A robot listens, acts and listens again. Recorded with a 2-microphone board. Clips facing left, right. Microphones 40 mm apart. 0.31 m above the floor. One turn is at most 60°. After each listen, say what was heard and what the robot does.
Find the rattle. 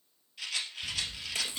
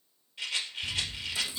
The rattle: about 20° right or 160° right. Turn 20° right.
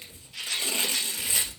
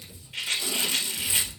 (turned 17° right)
So it is at 140° right. Turn 60° right.
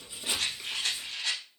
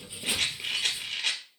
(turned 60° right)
The rattle is now 80° right. Turn 60° right.
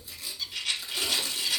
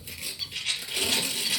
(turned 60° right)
The rattle is now 20° right. Turn 20° right.
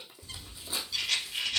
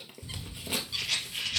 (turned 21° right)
Facing the rattle.